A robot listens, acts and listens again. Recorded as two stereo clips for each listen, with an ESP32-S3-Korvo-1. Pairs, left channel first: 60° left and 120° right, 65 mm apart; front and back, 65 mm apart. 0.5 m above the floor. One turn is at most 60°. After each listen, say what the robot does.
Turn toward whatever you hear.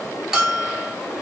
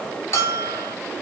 Turn 35° right.
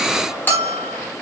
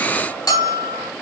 Found it: a bell, straight ahead.